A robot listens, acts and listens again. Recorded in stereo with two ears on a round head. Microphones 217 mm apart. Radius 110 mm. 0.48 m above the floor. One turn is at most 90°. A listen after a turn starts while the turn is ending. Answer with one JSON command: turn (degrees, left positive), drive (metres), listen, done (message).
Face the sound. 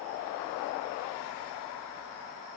{"listen": true}
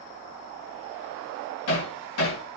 {"turn": 70}
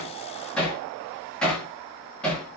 {"done": "Found it: hammering, straight ahead."}